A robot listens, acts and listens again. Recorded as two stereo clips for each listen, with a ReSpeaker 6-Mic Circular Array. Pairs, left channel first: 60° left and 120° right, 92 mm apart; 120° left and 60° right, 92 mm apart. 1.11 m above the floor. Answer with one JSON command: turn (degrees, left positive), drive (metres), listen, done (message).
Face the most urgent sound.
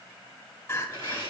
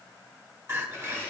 {"done": "Found it: crying, straight ahead."}